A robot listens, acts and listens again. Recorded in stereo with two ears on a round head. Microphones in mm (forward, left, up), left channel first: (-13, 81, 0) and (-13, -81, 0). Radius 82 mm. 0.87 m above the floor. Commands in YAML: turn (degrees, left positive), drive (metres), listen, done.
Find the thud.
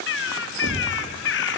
turn: -65
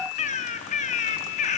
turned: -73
listen: true
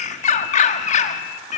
done: "I heard a thud, but can't make it out now. It was about 5° left or 40° right."